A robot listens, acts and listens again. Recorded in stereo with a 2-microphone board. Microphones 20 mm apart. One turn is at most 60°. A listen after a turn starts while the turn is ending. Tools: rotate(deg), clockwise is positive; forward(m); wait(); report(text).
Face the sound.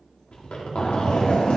rotate(-60)
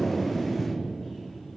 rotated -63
rotate(-30)
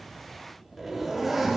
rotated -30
report("Facing the zipper, 1 to 2 m away.")